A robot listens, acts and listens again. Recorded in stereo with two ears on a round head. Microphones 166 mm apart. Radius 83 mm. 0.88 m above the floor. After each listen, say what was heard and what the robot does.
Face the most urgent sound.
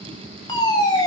The fire alarm: about 25° left or 155° left. Turn 25° left.
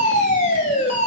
So it is at 125° left. Turn 125° left.
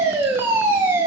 The fire alarm is now 15° right. Turn 15° right.
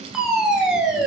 Found it: a fire alarm, straight ahead.